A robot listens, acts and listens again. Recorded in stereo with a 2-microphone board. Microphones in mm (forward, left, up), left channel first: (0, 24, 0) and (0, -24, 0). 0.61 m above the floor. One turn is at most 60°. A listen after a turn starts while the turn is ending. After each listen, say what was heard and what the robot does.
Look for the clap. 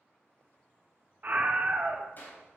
The clap: about 50° left or 130° left. Turn 50° left.
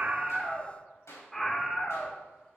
So it is at 80° left. Turn 60° left.
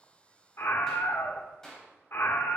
The clap is now 10° left. Turn 10° left.
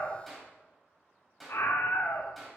Found it: a clap, straight ahead, 2 to 4 m away.